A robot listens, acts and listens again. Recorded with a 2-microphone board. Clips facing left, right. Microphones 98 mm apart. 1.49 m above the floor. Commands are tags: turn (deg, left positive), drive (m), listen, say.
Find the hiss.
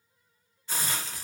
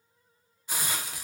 <turn deg="-30"/>
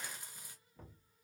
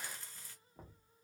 <listen/>
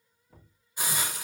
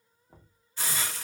<turn deg="15"/>
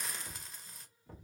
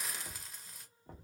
<say>Facing the hiss, under 1 m away.</say>